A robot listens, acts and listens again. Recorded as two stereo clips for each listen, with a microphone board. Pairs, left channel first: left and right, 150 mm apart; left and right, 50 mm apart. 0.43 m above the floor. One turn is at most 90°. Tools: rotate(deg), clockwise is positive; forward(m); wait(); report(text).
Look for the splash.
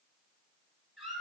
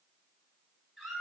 wait()
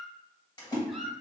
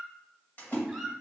rotate(-30)
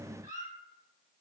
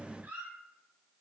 wait()
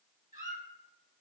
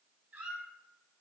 report("I heard a splash, but can't make it out now. It was about straight ahead or 120° left.")